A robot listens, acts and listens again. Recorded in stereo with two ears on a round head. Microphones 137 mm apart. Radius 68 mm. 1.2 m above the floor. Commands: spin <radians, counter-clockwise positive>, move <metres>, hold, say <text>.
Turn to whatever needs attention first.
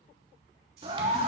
spin -0.61
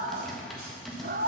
spin -1.75
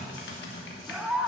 say Found it: a scream, straight ahead, under 1 m away.